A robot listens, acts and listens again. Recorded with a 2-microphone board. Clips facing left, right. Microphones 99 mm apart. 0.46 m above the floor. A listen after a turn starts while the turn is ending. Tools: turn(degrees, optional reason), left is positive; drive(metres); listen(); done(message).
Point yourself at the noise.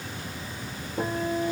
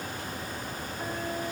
turn(degrees=75, reason="The guitar: about 75° left or 105° left.")
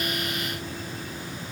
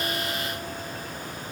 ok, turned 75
listen()
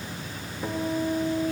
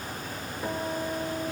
done("Facing the guitar, over 4 m away.")